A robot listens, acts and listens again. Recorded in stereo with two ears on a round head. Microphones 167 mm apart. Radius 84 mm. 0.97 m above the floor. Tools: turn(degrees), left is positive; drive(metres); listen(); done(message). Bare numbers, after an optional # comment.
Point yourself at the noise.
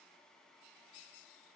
listen()
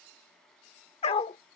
# The dog barking: about 30° left or 150° left.
turn(30)
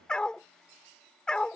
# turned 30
done("Facing the dog barking.")